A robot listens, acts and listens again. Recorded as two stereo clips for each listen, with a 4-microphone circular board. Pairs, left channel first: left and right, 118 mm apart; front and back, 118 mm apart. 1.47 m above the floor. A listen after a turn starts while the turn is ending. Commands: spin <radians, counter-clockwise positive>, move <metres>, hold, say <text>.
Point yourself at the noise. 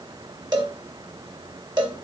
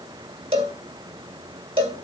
spin -2.44
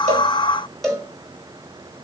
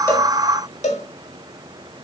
say Found it: a cowbell, straight ahead.